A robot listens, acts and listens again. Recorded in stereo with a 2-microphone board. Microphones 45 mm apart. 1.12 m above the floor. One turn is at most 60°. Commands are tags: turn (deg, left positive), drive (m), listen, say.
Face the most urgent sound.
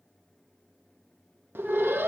<turn deg="-55"/>
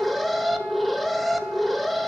<say>Facing the alarm.</say>